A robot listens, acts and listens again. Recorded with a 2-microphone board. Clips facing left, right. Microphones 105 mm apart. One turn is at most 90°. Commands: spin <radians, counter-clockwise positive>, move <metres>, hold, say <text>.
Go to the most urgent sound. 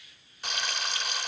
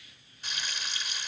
hold
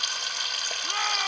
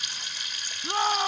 spin -0.52
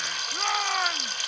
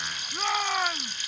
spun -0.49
move 1.0
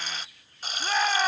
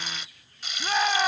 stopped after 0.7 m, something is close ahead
say Blocked. The shout is further on, straight ahead.